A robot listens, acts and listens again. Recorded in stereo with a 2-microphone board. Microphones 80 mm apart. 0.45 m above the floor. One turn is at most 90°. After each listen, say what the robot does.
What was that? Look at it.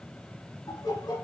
Turn 55° left.
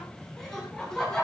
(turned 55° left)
Turn 10° left.
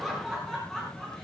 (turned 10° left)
Turn 10° left.
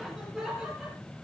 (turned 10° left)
Facing the laughter, over 4 m away.